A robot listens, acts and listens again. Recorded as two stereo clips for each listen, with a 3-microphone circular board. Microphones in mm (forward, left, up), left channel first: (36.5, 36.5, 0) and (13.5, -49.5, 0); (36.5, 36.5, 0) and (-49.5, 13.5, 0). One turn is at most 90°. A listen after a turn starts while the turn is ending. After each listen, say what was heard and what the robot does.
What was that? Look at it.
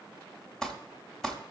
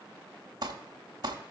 The crumpling: 160° left. Turn 90° left.
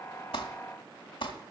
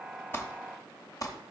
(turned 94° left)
The crumpling is now 65° left. Turn 65° left.
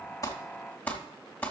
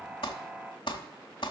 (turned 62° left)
Found it: crumpling, straight ahead, 1 to 2 m away.